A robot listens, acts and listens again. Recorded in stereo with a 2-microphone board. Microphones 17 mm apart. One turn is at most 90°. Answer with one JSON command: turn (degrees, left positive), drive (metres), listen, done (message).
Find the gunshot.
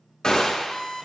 {"turn": 35}
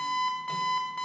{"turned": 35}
{"listen": true}
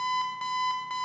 {"done": "I heard a gunshot, but can't make it out now. It was about straight ahead or 110° left."}